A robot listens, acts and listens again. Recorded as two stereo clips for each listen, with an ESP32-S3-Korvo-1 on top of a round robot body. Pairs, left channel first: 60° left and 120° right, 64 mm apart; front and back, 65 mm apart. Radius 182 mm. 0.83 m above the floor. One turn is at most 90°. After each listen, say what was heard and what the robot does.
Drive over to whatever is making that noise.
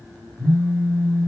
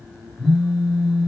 The phone buzzing: 80° right. Turn 80° right.
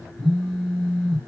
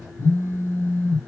The phone buzzing is now 15° right. Turn 15° right.
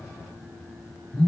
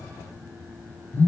Drive 1.0 m forward.
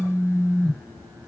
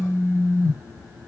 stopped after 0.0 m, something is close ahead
Something is in my way. I am facing the phone buzzing but have not reached it.